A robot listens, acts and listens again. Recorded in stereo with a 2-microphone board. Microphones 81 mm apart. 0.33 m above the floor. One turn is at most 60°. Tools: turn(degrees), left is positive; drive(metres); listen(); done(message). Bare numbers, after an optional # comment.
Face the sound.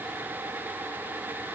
listen()
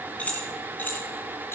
# The keys jangling: about 25° left or 155° left.
turn(25)
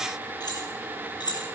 # So it is at 115° left.
turn(60)
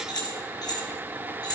# The keys jangling is now 55° left.
turn(55)
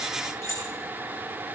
# The keys jangling is now 40° left.
turn(40)
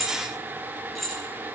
done("Facing the keys jangling.")